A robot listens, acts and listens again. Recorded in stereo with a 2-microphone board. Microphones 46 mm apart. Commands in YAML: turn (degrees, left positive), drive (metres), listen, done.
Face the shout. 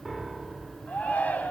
turn: 30
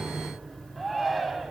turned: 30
done: "Found it: a shout, straight ahead, 2 to 4 m away."